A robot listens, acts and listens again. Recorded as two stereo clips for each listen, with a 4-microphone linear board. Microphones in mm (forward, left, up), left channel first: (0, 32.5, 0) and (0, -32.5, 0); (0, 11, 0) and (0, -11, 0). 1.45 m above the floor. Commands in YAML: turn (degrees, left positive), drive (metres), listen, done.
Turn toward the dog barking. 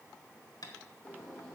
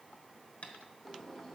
listen: true
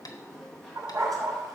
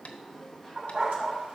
turn: -90
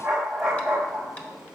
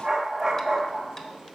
turn: -10
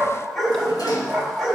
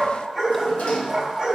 done: "Found it: a dog barking, straight ahead."